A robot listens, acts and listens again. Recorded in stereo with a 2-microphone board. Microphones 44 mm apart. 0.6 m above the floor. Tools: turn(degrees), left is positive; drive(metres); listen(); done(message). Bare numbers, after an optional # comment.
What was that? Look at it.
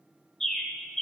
turn(30)
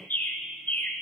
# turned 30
# So it is at 135° left.
turn(135)
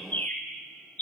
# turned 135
# The bird is now 40° left.
turn(40)
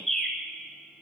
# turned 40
done("Facing the bird, 1 to 2 m away.")